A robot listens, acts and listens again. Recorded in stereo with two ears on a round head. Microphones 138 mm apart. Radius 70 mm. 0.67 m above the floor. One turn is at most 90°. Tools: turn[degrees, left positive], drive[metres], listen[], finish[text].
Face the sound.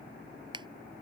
Thought: The finger snap: about 30° right or 150° right.
Action: turn[-30]
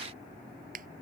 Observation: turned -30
Thought: So it is at 120° right.
Action: turn[-90]
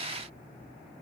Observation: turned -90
Thought: Nothing new. It was at 30° right.
Action: turn[-30]
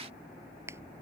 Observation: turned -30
Thought: The finger snap is now 15° right.
Action: turn[-15]
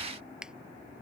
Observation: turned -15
Action: finish[Facing the finger snap.]